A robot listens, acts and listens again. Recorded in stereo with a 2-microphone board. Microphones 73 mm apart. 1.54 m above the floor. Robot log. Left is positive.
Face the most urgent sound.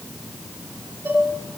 cmd idle
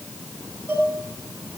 cmd idle
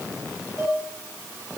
end: I can't make out anything urgent, only dishes clattering.